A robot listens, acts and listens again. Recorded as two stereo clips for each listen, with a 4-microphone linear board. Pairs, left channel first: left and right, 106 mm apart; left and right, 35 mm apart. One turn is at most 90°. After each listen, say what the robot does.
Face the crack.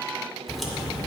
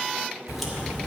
Turn 30° left.
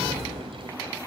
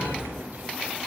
Turn 30° right.
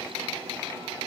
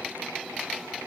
I heard a crack from this way, but can't make it out now.